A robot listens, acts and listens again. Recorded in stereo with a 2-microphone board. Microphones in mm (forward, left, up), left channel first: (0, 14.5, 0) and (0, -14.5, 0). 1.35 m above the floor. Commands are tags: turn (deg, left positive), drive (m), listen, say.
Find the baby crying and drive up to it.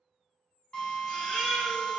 <turn deg="30"/>
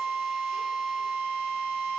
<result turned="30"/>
<listen/>
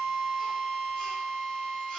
<listen/>
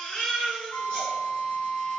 <turn deg="145"/>
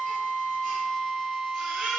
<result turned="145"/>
<drive m="1.0"/>
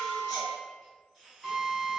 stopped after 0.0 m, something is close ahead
<listen/>
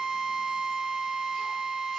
<listen/>
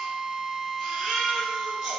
<say>Something is in my way. I am facing the baby crying but have not reached it.</say>